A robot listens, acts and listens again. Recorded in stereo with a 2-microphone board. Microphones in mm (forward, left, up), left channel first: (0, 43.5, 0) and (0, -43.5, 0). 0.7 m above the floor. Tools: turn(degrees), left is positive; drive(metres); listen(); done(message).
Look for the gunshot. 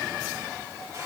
listen()
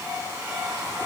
listen()
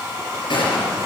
turn(degrees=90)
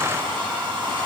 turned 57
turn(degrees=35)
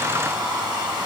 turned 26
done("Facing where the gunshot came from. I can't hear it now.")